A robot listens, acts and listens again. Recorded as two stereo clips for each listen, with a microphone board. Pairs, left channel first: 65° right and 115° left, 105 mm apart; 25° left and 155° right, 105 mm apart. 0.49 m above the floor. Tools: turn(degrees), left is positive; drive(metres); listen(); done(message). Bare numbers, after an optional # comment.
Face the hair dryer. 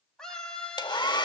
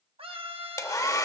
# The hair dryer: 30° right.
turn(-30)
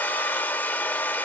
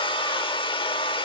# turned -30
done("Facing the hair dryer, under 1 m away.")